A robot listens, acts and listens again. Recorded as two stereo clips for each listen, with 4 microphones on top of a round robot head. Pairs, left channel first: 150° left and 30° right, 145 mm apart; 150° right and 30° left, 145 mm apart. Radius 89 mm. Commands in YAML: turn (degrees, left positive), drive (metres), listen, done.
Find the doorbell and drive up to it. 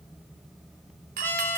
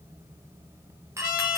turn: -40
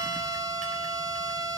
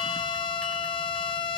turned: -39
listen: true
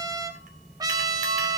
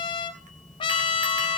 listen: true
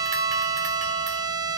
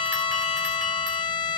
done: "Facing where the doorbell came from. I can't hear it now. I did not reach it."